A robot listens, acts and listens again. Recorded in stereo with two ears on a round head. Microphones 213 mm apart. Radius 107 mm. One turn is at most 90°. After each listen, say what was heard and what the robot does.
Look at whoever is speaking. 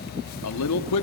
Turn 90° left.
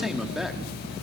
Found it: a man speaking, straight ahead.